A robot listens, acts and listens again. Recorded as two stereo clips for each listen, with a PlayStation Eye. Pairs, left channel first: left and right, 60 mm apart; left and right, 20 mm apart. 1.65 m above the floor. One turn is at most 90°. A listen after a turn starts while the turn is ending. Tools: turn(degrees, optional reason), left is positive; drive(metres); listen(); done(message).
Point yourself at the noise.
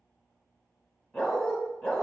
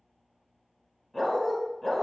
turn(degrees=15, reason="The dog barking: about 15° left or 165° left.")
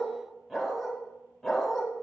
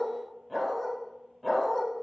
turn(degrees=30)
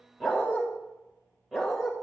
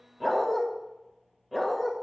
done("Facing the dog barking, 2 to 4 m away.")